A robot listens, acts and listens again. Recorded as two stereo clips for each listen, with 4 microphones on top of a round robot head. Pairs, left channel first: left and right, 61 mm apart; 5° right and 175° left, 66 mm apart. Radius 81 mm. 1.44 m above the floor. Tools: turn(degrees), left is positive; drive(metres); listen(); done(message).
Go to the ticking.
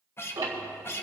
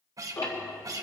turn(degrees=-55)
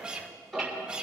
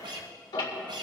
drive(metres=1.0)
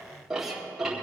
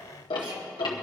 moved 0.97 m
drive(metres=1.0)
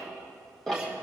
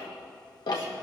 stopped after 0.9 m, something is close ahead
done("I am next to the ticking.")